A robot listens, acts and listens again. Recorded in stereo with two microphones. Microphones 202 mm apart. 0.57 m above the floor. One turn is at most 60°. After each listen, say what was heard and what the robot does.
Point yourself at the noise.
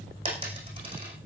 The dropped coin: about 25° right or 155° right. Turn 25° right.
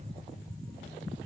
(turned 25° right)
Keep listening.
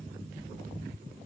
I heard a dropped coin, but can't make it out now. It was about straight ahead or 130° right.